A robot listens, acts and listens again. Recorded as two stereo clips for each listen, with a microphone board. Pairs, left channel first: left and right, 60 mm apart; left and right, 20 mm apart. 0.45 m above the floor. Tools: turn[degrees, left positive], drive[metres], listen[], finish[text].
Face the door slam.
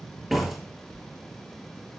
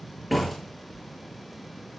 Action: turn[30]
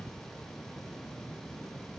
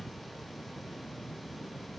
Action: listen[]
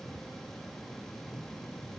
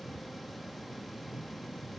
Action: finish[I heard a door slam, but can't make it out now. It was about 25° right or 145° left.]